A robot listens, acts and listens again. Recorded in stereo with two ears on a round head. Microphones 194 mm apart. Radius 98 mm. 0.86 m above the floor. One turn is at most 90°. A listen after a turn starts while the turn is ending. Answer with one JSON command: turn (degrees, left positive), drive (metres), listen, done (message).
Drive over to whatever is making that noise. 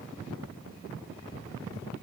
{"listen": true}
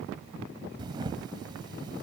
{"turn": -20}
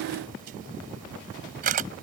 {"turn": -90}
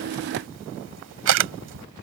{"turn": -85}
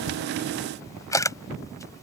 {"turn": 15}
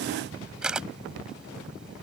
{"drive": 1.0}
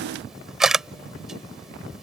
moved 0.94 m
{"drive": 1.0}
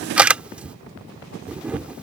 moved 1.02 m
{"drive": 1.0}
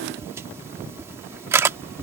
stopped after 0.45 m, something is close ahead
{"turn": -10}
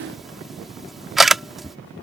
{"done": "Arrived at the camera shutter, straight ahead."}